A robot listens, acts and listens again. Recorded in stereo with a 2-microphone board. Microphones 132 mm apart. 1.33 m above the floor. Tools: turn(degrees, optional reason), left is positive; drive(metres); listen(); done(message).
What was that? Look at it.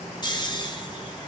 turn(degrees=35, reason="The snoring: about 35° left or 145° left.")
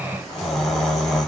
done("Facing the snoring, under 1 m away.")